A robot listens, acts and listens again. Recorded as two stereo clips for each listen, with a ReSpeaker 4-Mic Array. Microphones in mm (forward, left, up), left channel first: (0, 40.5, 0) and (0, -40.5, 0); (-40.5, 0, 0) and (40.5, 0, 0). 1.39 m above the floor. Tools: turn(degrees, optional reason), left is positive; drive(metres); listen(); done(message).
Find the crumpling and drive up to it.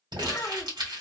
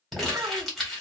turn(degrees=-95, reason="The crumpling: 95° right.")
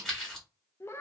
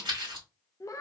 drive(metres=1.0)
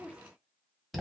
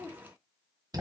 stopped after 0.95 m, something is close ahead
done("Arrived at the crumpling, straight ahead.")